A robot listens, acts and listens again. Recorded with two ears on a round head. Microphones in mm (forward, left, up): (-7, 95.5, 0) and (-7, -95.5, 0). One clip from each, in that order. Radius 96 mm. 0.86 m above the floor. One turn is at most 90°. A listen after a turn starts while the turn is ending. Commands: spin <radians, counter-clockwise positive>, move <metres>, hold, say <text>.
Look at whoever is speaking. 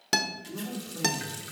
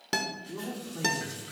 spin -0.52
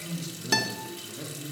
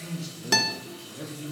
spin -0.52
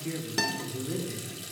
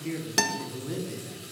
spin -0.52
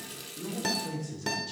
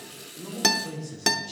say Found it: a man speaking, straight ahead.